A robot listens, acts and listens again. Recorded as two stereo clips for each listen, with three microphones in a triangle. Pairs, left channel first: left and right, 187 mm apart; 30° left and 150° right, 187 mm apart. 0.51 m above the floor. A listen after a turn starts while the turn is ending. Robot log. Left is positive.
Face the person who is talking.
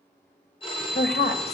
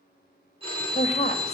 note: The woman speaking: 75° left.
cmd yaw +75
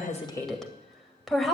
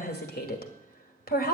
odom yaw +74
end: Found it: a woman speaking, straight ahead.